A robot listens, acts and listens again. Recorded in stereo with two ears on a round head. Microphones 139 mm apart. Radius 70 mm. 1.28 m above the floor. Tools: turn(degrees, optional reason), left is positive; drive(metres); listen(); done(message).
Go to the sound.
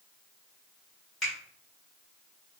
turn(degrees=30)
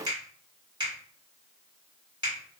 turn(degrees=-25, reason="So it is at 25° right.")
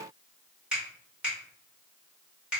drive(metres=1.0)
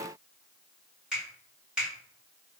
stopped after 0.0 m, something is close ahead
done("Something is in my way. I am facing the finger snap but have not reached it.")